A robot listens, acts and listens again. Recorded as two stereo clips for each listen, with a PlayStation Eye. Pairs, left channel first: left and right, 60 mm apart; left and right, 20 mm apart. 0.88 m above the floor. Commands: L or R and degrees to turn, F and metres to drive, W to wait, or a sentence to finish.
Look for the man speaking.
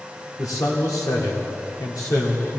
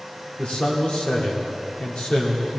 L90
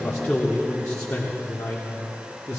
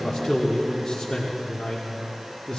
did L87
L40
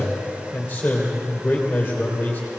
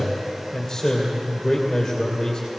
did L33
L15
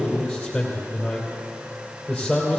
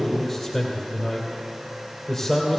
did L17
Facing the man speaking.